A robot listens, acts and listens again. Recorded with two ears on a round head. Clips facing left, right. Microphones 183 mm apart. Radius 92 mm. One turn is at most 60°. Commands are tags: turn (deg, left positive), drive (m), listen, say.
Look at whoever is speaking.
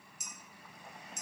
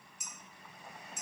<listen/>
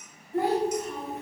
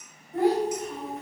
<turn deg="30"/>
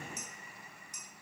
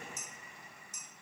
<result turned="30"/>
<listen/>
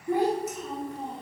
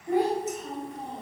<turn deg="-30"/>
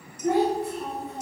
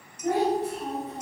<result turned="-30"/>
<say>Found it: a child speaking, straight ahead.</say>